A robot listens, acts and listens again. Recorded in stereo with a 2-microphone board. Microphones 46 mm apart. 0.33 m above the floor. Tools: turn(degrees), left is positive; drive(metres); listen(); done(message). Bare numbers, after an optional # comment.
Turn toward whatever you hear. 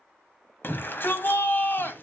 # The shout: about 50° left or 130° left.
turn(50)
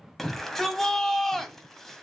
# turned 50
done("Facing the shout.")